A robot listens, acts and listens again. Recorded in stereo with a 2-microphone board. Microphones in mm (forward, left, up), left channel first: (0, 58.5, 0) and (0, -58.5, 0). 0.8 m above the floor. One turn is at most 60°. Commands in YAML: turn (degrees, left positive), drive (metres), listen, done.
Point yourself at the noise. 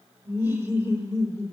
turn: -25
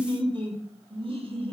turn: -60
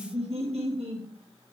turn: -60
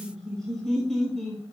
done: "Facing the laughter, over 4 m away."